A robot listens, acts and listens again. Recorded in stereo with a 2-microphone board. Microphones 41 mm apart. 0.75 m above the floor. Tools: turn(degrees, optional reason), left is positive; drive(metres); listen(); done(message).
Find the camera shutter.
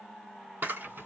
turn(degrees=-60, reason="The camera shutter: about 60° right or 120° right.")
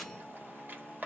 turn(degrees=-55, reason="So it is at 55° right.")
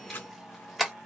done("Found it: a camera shutter, straight ahead.")